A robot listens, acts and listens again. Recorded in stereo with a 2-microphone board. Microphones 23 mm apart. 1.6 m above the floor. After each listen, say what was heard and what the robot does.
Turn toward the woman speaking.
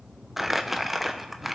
Keep listening.
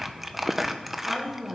The woman speaking: about 20° right or 160° right. Turn 20° right.
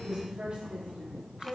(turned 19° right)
So it is at 140° right. Turn 140° right.
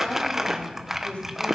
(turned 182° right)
The woman speaking is now 50° left. Turn 50° left.
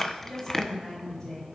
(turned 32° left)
The woman speaking is now 20° left. Turn 20° left.
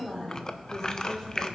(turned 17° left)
Facing the woman speaking.